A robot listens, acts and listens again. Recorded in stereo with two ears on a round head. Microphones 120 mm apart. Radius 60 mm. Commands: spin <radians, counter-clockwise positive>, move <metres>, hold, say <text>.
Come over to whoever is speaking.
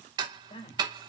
spin 0.96
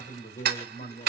spin 1.22
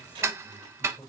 move 1.0
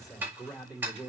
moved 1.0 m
move 1.0
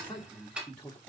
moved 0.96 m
spin 0.17
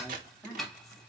move 1.0
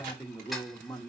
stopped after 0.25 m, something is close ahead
say Arrived at the man speaking, straight ahead.